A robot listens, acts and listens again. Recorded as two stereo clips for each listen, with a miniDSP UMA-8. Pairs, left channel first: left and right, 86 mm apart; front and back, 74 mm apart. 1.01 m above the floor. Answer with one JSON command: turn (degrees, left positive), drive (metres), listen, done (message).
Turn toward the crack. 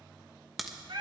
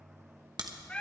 {"turn": 180}
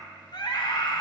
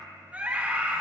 {"done": "I heard a crack from this way, but can't make it out now."}